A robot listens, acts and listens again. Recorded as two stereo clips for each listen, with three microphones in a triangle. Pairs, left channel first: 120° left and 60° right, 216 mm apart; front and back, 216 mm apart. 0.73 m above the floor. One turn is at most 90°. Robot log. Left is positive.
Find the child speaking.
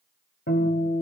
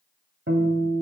cmd idle
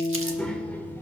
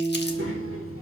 note: The child speaking: 160° right.
cmd yaw -90
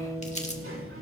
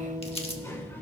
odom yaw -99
note: The child speaking is now 80° right.
cmd yaw -80
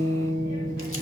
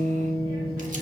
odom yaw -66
note: Nothing new. It was at 15° right.
cmd yaw -15
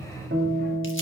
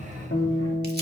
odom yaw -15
note: The child speaking is now 15° right.
cmd yaw -15
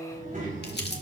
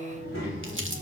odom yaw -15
end: Found it: a child speaking, straight ahead.